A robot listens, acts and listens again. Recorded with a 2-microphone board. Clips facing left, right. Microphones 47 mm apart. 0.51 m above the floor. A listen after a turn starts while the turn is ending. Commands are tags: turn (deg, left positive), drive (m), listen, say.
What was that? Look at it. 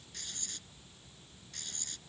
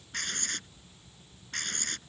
<turn deg="-65"/>
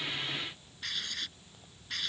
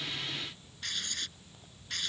<say>Found it: writing, straight ahead.</say>